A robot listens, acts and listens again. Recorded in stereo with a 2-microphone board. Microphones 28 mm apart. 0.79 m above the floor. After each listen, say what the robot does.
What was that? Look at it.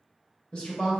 Turn 40° left.
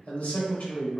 Turn 100° left.
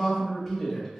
Facing the man speaking.